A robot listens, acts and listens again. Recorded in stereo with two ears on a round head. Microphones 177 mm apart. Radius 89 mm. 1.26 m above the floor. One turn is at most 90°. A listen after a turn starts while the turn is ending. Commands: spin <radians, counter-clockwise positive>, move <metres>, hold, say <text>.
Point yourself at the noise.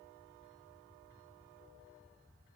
hold
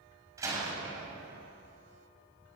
spin -0.26
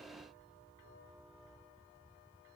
hold
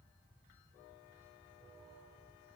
say I heard a door slam, but can't make it out now. It was about straight ahead or 150° right.